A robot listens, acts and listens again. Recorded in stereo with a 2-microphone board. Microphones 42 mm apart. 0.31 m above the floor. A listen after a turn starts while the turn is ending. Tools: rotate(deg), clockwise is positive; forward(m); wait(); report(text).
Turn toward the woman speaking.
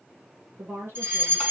rotate(70)
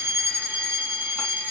wait()
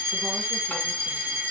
wait()
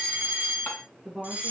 report("Facing the woman speaking.")